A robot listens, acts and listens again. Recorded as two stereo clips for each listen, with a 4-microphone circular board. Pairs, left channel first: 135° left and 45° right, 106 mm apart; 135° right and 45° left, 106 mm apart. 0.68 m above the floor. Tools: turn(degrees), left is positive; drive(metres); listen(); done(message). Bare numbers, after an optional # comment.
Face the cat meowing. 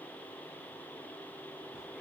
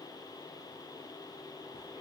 listen()
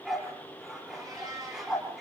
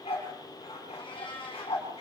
# The cat meowing: 100° right.
turn(-100)
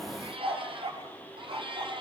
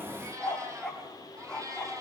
# The cat meowing is now 10° right.
turn(-10)
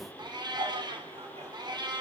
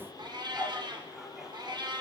done("Facing the cat meowing.")